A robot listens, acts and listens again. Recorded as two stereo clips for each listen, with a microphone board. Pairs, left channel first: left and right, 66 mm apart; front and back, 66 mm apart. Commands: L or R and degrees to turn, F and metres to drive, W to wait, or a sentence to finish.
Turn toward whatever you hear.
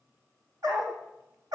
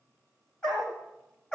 R75
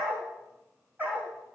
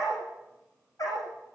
R25
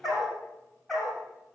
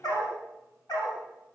Found it: a dog barking, straight ahead.